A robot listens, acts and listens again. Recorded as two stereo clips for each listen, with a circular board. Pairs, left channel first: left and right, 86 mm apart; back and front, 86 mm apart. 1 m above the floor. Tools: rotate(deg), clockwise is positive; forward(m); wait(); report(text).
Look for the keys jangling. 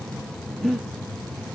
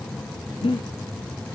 wait()
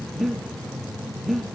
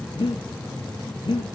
wait()
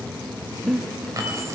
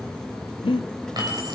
rotate(40)
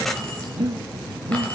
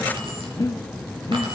rotate(-15)
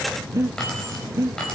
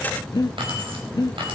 rotate(-10)
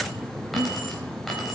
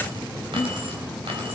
report("Facing the keys jangling, 2 to 4 m away.")